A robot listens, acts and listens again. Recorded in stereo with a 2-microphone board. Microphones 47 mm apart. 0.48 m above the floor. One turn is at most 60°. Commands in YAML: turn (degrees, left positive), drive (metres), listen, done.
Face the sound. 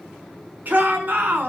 turn: -40
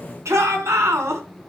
turn: -60
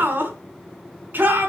turn: -45
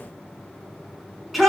done: "Facing the shout, over 4 m away."